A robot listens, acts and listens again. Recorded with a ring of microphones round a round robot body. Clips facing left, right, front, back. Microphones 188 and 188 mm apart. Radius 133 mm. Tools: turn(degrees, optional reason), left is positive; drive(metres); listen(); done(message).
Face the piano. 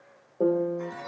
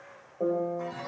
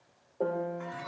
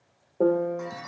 turn(degrees=135, reason="The piano: 135° left.")
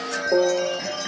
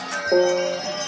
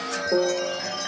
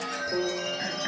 done("Found it: a piano, straight ahead.")